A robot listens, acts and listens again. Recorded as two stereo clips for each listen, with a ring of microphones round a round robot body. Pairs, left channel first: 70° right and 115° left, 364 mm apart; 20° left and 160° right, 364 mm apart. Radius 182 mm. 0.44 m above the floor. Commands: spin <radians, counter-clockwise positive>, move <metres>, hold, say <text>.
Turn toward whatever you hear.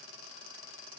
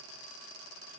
hold
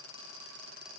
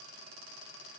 hold
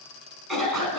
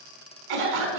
spin -2.71
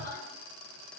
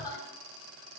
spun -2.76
hold
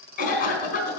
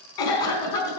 say Facing the cough, over 4 m away.